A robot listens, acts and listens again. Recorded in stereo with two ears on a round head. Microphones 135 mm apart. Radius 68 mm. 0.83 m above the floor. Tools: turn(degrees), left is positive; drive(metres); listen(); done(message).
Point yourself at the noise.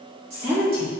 turn(degrees=-40)
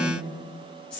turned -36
turn(degrees=10)
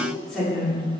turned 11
done("Found it: a woman speaking, straight ahead.")